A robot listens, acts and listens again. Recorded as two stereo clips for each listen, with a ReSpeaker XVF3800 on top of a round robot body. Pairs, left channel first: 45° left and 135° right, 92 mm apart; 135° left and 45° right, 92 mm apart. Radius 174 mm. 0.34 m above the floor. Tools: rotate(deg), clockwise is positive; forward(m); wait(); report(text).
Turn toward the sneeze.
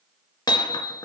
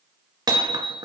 wait()
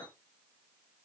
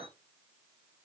wait()
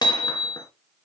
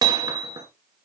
report("I can't make out a sneeze, only hammering.")